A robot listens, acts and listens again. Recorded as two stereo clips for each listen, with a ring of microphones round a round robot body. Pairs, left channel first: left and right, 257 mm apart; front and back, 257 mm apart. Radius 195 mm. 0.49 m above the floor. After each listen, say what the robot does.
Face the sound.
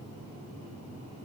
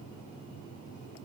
Keep listening.
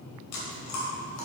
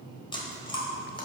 Turn 70° left.
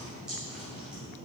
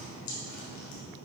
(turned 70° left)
Found it: chewing, straight ahead.